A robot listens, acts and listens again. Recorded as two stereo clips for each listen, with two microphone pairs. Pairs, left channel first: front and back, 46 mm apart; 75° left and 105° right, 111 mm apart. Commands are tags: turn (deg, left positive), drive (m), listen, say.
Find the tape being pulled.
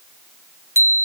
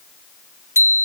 <listen/>
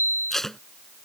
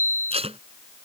<turn deg="-80"/>
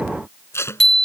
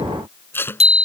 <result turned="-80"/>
<say>Facing the tape being pulled.</say>